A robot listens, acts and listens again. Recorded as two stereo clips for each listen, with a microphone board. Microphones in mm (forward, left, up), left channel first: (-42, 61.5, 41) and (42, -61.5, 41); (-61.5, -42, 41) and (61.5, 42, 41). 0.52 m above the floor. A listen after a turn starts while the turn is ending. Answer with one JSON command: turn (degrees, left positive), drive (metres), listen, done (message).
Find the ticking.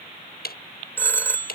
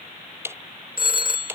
{"turn": 110}
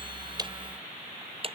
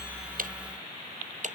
{"done": "Found it: ticking, straight ahead."}